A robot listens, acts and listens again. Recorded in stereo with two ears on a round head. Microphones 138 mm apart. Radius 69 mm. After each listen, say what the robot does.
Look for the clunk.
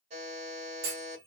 Turn 70° right.
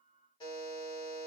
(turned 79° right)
Keep listening.
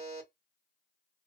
I heard a clunk, but can't make it out now. It was about 10° left or 35° right.